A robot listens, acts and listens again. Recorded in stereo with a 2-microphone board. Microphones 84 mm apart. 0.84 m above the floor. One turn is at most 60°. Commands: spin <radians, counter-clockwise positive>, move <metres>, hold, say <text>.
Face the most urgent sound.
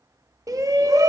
spin -0.79
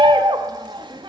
spin -1.05
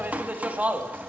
spin -0.35
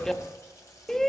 say Found it: a shout, straight ahead.